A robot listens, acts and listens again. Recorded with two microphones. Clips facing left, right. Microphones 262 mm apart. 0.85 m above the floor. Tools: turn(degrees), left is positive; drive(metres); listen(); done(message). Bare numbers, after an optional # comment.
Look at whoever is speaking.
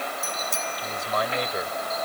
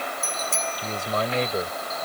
# The man speaking: about 30° right or 150° right.
turn(-30)
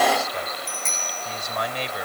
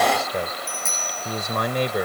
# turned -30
# So it is at 120° right.
turn(-120)
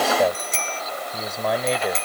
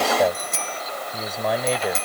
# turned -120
done("Facing the man speaking.")